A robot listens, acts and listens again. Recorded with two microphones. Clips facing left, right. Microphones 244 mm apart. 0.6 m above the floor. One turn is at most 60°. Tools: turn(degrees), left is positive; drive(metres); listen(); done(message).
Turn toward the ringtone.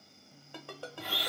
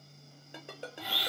turn(degrees=-20)
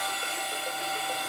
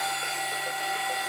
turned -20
listen()
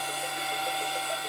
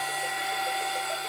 listen()
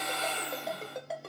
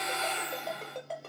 done("Facing the ringtone.")